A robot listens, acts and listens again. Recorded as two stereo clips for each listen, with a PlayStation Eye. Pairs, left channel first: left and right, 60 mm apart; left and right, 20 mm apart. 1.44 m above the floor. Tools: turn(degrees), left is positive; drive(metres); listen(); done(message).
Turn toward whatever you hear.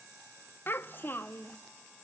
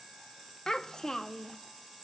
turn(degrees=35)
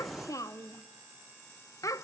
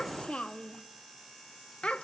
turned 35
turn(degrees=105)
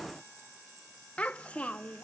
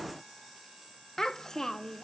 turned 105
turn(degrees=20)
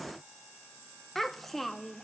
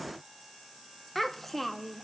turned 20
done("Facing the child speaking, under 1 m away.")